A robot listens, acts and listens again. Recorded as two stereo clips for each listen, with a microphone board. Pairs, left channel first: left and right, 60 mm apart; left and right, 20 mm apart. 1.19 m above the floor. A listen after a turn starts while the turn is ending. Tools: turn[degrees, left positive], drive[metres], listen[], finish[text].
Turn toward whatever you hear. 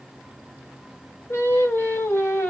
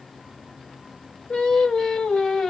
Thought: The singing: about 45° left or 135° left.
Action: turn[45]
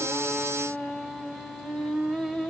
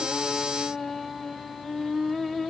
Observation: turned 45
Action: finish[Facing the singing, 1 to 2 m away.]